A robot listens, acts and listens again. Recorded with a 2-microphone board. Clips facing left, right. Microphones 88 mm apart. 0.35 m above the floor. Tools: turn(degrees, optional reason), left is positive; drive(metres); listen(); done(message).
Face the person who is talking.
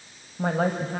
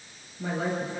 turn(degrees=55, reason="The woman speaking: about 55° left or 125° left.")
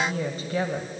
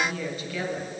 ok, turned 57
turn(degrees=45, reason="So it is at 45° left.")
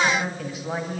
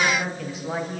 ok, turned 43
done("Facing the woman speaking.")